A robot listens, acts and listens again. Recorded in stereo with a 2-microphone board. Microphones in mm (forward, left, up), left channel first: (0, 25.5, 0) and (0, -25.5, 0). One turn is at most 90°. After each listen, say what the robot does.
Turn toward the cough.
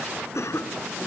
Turn 70° left.
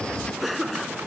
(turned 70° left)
Found it: a cough, straight ahead.